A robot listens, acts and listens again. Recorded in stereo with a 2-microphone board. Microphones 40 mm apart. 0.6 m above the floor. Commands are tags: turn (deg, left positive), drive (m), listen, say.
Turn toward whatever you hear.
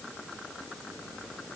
<listen/>
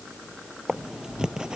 <turn deg="-15"/>
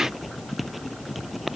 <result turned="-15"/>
<say>Found it: writing, straight ahead.</say>